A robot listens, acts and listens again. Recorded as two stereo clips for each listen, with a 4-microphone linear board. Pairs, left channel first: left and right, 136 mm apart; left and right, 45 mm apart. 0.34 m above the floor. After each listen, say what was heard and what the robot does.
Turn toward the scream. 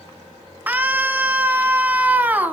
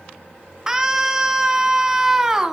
Turn 30° right.
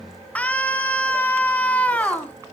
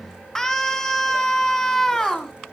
So it is at 10° left. Turn 10° left.
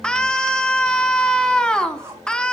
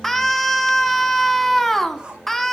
Facing the scream, 2 to 4 m away.